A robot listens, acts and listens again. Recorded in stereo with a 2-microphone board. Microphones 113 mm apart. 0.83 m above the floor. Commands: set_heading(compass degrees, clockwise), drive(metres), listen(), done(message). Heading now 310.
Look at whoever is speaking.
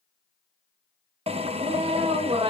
set_heading(15)
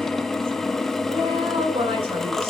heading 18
set_heading(68)
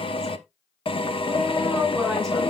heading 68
done("Facing the woman speaking, over 4 m away.")